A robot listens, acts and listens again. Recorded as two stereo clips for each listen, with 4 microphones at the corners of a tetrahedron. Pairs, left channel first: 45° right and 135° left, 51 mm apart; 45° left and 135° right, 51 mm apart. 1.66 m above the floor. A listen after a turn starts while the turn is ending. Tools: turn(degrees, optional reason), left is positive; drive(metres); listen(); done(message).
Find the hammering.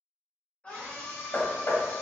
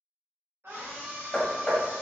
turn(degrees=-30, reason="The hammering: 30° right.")
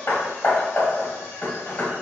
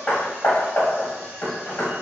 done("Facing the hammering.")